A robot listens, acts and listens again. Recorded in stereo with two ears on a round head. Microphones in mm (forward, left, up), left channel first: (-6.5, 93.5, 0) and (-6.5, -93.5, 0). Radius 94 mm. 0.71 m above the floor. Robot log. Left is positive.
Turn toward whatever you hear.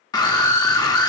note: The scream: about 20° left or 160° left.
cmd yaw +20
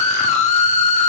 note: So it is at 140° left.
cmd yaw +140
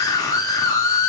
note: The scream is now 20° left.
cmd yaw +20
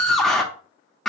end: Found it: a scream, straight ahead, under 1 m away.